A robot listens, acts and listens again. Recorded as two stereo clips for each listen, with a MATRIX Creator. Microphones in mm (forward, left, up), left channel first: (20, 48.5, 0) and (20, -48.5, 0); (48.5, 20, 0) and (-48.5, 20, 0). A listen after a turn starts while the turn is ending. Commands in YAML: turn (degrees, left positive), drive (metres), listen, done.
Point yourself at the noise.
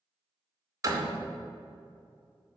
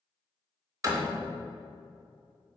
turn: -140
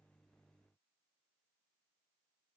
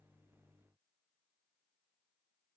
done: "I heard a door slam from this way, but can't make it out now."